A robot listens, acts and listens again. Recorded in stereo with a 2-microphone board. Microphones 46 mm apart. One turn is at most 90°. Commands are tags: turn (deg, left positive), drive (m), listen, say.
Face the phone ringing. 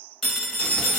<turn deg="30"/>
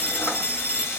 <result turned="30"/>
<turn deg="90"/>
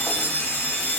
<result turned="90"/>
<turn deg="75"/>
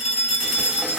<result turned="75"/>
<turn deg="-15"/>
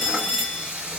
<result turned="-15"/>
<say>Found it: a phone ringing, straight ahead.</say>